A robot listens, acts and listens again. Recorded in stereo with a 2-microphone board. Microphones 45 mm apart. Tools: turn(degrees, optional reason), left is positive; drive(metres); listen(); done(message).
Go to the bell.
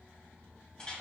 listen()
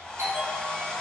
turn(degrees=-90)
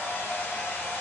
listen()
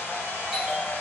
drive(metres=1.0)
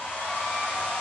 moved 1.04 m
listen()
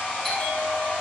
drive(metres=1.0)
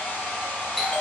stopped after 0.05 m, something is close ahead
done("I am next to the bell.")